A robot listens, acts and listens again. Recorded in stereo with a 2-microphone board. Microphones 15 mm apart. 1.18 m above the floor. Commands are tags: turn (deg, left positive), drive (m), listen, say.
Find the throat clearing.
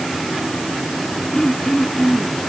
<turn deg="35"/>
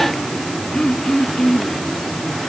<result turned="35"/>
<turn deg="110"/>
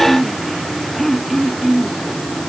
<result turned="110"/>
<say>Found it: throat clearing, straight ahead.</say>